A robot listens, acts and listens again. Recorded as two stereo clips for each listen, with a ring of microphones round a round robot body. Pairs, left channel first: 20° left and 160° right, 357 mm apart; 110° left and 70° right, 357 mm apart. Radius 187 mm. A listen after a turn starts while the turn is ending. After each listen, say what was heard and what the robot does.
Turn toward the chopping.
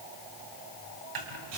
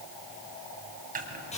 The chopping: 135° right. Turn 135° right.
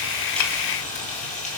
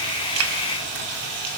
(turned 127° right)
Keep listening.
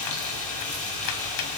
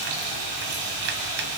Keep listening.
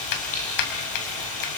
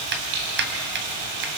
The chopping is now 10° right. Turn 10° right.
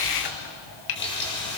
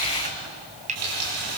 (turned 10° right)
Found it: chopping, straight ahead, 2 to 4 m away.